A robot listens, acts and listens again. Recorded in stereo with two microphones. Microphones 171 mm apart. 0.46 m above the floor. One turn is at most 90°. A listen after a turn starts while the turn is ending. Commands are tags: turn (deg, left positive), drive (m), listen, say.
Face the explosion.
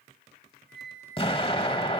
<turn deg="30"/>
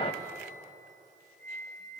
<listen/>
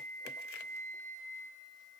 <say>I heard an explosion, but can't make it out now. It was about straight ahead or 120° left.</say>